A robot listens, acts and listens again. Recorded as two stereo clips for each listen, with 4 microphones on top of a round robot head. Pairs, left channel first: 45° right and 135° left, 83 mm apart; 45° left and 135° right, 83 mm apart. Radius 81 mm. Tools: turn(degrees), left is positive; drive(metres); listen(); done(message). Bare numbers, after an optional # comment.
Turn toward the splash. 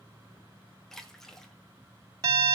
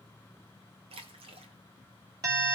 # The splash: 130° right.
turn(-130)
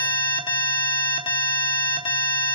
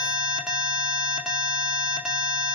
done("Facing where the splash came from. I can't hear it now.")